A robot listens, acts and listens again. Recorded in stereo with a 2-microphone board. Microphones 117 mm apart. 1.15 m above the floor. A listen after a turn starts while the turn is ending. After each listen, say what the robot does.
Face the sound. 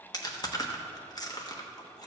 Turn 30° left.
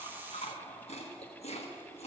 Turn 115° left.
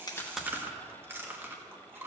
Turn 20° right.
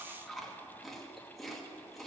Facing the chewing.